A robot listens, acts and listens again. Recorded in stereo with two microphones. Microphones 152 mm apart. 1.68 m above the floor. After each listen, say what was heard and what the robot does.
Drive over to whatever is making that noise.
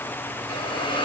The hiss: about 35° left or 145° left. Turn 35° left.
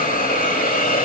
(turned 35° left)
So it is at 110° left. Turn 110° left.
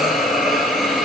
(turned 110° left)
Drive 1.0 m forward.
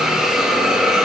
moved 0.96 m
Drive 1.0 m forward.
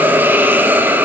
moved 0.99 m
The hiss is now 10° right. Turn 10° right.
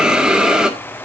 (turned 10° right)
Drive 1.0 m forward.
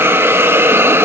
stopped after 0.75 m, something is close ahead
The hiss is now 15° right. Turn 15° right.
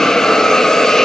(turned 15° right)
Arrived at the hiss, straight ahead.